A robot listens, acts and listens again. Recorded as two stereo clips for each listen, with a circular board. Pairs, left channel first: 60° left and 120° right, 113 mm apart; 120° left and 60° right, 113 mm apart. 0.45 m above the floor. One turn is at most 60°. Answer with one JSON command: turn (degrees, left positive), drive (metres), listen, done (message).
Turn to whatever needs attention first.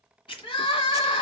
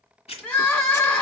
{"turn": 50}
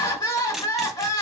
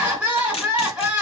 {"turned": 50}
{"turn": 15}
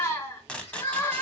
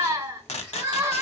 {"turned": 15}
{"done": "Facing the crying."}